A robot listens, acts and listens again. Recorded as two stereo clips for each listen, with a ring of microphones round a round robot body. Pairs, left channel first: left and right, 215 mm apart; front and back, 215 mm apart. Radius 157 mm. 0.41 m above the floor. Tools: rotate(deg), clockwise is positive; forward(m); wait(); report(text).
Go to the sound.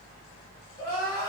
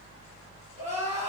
rotate(-125)
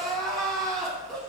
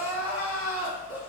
forward(1.0)
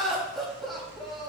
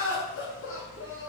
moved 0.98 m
forward(1.0)
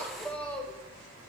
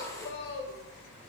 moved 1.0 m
rotate(-10)
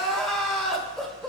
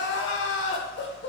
forward(1.0)
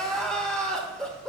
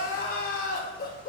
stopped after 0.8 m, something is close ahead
report("I am next to the crying.")